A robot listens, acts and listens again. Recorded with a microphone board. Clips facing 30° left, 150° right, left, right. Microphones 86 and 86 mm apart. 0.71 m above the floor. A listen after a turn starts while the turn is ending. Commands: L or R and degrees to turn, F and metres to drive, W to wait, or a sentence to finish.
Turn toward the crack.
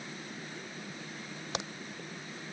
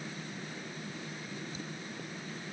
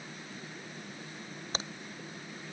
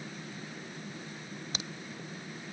L35
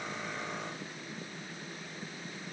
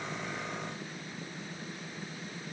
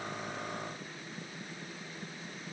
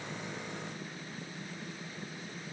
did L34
Facing where the crack came from. I can't hear it now.